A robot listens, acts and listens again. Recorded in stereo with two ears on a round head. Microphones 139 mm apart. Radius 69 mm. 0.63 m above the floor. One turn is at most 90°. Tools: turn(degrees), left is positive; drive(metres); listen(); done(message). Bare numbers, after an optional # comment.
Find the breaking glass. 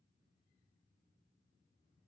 listen()
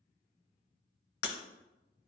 # The breaking glass: about 75° left or 105° left.
turn(75)
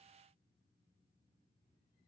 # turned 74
listen()
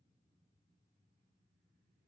done("I heard breaking glass, but can't make it out now. It was about straight ahead or 35° left.")